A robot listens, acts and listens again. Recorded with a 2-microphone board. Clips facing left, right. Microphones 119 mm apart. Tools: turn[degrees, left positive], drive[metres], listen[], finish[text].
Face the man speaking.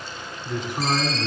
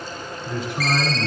Thought: The man speaking: about 25° left or 155° left.
Action: turn[25]
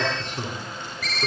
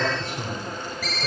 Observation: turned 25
Thought: So it is at 130° left.
Action: turn[130]
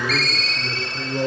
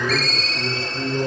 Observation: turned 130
Thought: The man speaking is now 20° right.
Action: turn[-20]
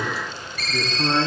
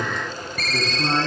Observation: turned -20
Thought: The man speaking is now 10° right.
Action: turn[-10]
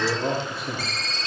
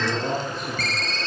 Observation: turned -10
Action: finish[Facing the man speaking, over 4 m away.]